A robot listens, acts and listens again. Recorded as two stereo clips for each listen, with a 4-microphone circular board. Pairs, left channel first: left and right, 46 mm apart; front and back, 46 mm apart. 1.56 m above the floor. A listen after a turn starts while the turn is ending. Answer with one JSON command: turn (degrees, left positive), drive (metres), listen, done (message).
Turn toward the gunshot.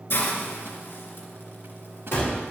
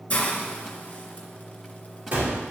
{"turn": 130}
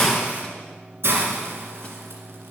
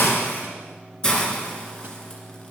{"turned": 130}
{"done": "Facing where the gunshot came from. I can't hear it now."}